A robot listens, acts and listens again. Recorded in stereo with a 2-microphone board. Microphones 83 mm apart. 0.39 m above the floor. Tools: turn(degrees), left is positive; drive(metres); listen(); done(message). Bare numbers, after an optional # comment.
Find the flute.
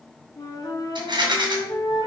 # The flute: about 50° left or 130° left.
turn(50)
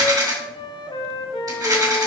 # So it is at 80° left.
turn(80)
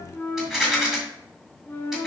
# The flute is now 30° left.
turn(30)
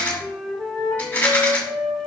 done("Facing the flute, 1 to 2 m away.")